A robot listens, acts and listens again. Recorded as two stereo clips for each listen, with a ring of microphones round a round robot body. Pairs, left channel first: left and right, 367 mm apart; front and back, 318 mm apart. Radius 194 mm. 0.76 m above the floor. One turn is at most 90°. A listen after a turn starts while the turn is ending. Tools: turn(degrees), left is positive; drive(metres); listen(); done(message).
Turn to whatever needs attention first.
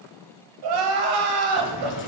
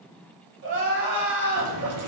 turn(degrees=-90)
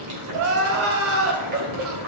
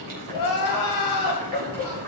turn(degrees=-35)
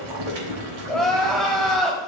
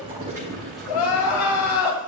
done("Found it: crying, straight ahead, 1 to 2 m away.")